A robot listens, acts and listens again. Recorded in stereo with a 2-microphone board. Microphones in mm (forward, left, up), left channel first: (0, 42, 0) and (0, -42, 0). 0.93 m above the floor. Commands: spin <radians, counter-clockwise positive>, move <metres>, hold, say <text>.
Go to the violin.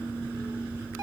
hold
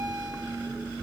hold
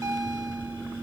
say I can't make out a violin, only a bell.